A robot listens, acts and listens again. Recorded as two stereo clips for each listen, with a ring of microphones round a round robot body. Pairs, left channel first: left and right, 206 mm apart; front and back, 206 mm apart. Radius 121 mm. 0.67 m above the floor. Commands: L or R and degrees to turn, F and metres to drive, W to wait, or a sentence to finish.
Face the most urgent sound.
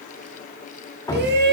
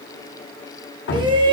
R115
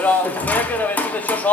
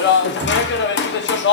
L10
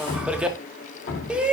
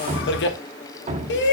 Found it: a shout, straight ahead, 1 to 2 m away.